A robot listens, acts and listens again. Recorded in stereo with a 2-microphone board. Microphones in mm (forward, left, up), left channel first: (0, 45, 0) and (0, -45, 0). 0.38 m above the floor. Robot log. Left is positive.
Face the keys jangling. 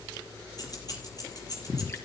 note: The keys jangling: about 45° left or 135° left.
cmd yaw +45
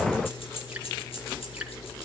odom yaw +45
note: So it is at 85° left.
cmd yaw +85
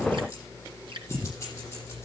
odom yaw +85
note: The keys jangling is now 30° left.
cmd yaw +30
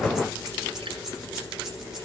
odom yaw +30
end: Found it: keys jangling, straight ahead.